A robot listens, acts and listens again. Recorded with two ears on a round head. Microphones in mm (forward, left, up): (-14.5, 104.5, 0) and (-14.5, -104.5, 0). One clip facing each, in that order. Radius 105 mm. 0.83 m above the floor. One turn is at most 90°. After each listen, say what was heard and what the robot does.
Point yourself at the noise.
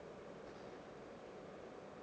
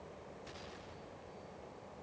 Keep listening.
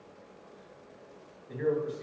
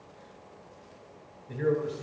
Turn 30° right.
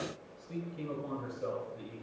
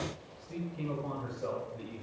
So it is at 15° left. Turn 15° left.
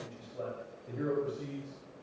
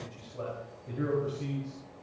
Found it: a man speaking, straight ahead, over 4 m away.